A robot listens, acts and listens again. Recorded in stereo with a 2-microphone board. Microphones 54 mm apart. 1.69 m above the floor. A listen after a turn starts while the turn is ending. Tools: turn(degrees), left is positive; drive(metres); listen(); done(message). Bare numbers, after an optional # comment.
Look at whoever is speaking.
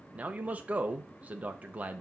# The man speaking: about 30° right or 150° right.
turn(-30)
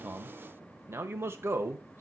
# So it is at 115° right.
turn(-115)
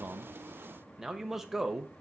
done("Found it: a man speaking, straight ahead.")